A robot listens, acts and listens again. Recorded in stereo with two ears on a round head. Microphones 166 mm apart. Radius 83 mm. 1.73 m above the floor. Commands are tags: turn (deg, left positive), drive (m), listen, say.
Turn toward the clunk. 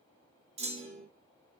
<turn deg="-35"/>
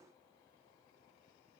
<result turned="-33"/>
<listen/>
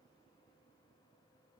<say>I heard a clunk, but can't make it out now. It was about straight ahead or 115° right.</say>